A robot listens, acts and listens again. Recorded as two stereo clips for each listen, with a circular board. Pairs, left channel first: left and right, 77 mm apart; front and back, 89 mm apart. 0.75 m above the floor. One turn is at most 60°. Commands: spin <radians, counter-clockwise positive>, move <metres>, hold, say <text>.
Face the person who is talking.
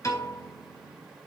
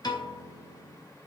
hold
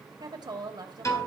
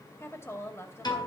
spin -1.05
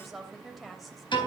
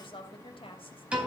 say Found it: a woman speaking, straight ahead.